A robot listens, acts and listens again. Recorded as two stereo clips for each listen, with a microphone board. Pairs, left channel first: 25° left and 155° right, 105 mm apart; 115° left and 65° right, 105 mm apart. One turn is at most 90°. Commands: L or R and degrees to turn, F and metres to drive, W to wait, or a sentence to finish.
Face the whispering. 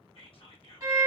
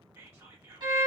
Facing the whispering.